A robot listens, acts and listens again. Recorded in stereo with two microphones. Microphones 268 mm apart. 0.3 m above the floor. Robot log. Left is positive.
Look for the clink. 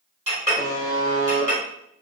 note: The clink: about 25° right or 155° right.
cmd yaw -25
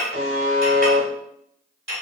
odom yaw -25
note: So it is at 125° right.
cmd yaw -125
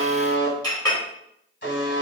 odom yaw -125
note: The clink is now 15° left.
cmd yaw +15
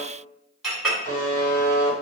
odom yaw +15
end: Facing the clink.